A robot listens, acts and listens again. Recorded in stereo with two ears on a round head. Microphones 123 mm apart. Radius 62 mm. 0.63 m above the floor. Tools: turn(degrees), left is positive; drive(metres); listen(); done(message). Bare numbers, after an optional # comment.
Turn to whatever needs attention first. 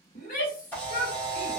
# The shout: about 60° left or 120° left.
turn(60)
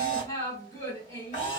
# So it is at 25° left.
turn(25)
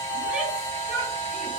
done("Facing the shout.")